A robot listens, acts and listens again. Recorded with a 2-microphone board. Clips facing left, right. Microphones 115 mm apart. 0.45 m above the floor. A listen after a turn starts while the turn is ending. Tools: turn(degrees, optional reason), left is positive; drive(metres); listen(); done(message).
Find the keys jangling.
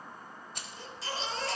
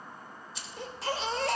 turn(degrees=55, reason="The keys jangling: about 55° left or 125° left.")
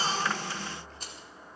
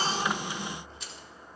listen()
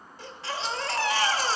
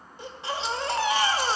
listen()
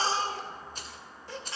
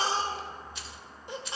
turn(degrees=50, reason="So it is at 50° left.")
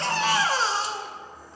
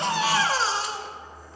listen()
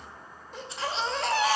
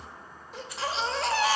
listen()
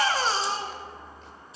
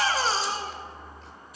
turn(degrees=30, reason="The keys jangling is now 30° left.")
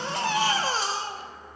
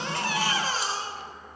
listen()
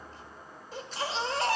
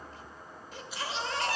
listen()
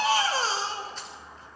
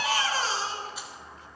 done("Facing where the keys jangling came from. I can't hear it now.")